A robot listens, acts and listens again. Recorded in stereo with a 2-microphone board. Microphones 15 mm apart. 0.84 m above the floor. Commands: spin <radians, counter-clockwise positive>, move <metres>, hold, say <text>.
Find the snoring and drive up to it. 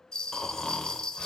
spin 0.79
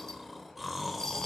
move 1.0
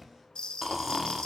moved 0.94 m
spin -0.17
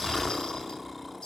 move 1.0
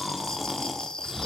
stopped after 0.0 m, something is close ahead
say I am next to the snoring.